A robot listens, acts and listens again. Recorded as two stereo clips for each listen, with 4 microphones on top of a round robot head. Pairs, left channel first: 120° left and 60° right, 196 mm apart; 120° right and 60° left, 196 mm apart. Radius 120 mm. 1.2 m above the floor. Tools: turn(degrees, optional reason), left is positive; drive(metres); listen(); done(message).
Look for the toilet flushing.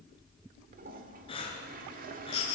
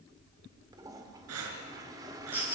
turn(degrees=-10, reason="The toilet flushing: 10° right.")
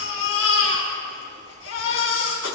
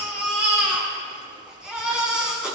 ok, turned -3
turn(degrees=-10, reason="Nothing new. It was at 10° right.")
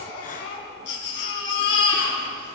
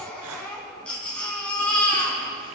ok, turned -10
listen()
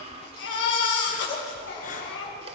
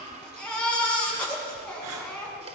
done("I heard a toilet flushing from this way, but can't make it out now.")